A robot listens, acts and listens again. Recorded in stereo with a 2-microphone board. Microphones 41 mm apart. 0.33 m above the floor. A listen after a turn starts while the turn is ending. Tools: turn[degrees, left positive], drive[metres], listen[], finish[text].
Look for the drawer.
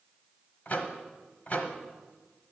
Action: listen[]
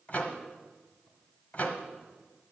Action: listen[]
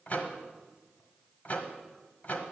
Action: finish[I can't make out a drawer, only a microwave.]